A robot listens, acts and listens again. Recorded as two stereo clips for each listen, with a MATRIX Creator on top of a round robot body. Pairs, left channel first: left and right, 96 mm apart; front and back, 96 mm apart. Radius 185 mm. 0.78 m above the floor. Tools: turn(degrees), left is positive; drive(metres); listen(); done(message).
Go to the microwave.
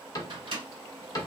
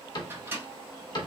turn(degrees=-115)
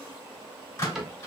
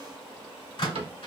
turn(degrees=35)
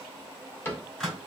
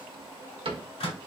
drive(metres=1.0)
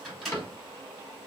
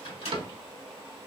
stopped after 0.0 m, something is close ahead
done("Blocked. The microwave is further on, straight ahead.")